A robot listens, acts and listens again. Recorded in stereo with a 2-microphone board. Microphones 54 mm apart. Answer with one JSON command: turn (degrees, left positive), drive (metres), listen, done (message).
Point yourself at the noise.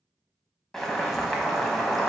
{"turn": 30}
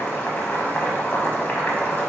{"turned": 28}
{"turn": 150}
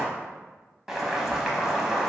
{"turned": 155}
{"done": "Facing the boiling, under 1 m away."}